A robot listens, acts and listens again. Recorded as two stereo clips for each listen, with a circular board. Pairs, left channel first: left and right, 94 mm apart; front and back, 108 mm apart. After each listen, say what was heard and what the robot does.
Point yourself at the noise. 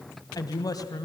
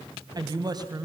The woman speaking: 135° left. Turn 135° left.
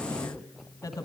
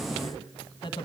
The woman speaking is now 40° left. Turn 40° left.
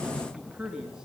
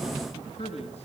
The woman speaking is now 10° right. Turn 10° right.
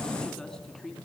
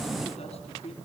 Found it: a woman speaking, straight ahead, 2 to 4 m away.